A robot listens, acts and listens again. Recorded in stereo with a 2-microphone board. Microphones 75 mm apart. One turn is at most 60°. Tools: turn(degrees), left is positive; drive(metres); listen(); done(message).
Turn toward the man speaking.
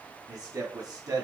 turn(degrees=-55)
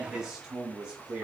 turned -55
turn(degrees=-15)
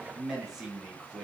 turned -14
turn(degrees=-10)
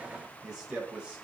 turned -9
turn(degrees=-15)
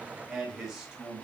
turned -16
turn(degrees=-10)
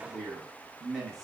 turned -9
done("Facing the man speaking.")